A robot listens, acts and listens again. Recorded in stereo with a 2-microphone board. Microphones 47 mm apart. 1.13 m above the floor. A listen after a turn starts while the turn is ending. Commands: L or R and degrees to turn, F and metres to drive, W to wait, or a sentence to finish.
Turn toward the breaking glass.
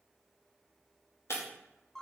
L65
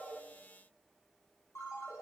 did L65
W
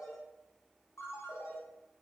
I heard breaking glass, but can't make it out now. It was about straight ahead or 50° left.